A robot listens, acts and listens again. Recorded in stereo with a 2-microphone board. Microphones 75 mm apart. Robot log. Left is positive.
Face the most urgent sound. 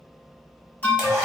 note: The alarm: about 25° left or 155° left.
cmd yaw +25
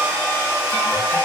cmd idle
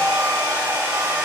cmd idle
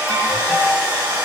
note: So it is at 130° left.
cmd yaw +130
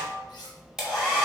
cmd idle
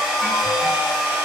cmd idle
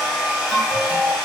end: Found it: an alarm, straight ahead, 1 to 2 m away.